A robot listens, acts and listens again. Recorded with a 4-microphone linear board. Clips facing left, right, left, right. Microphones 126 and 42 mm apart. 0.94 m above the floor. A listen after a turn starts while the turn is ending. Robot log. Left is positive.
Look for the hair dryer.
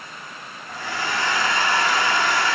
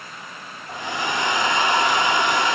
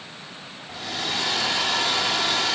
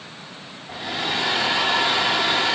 note: The hair dryer: about 20° right or 160° right.
cmd yaw -20
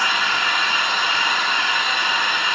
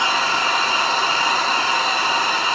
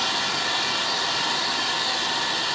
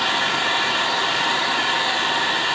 note: So it is at 140° right.
cmd yaw -140
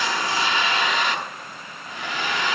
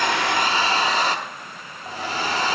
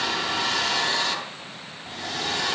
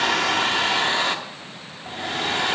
note: The hair dryer is now 35° right.
cmd yaw -35
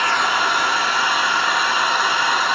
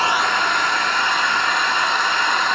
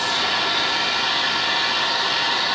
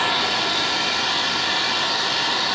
end: Facing the hair dryer.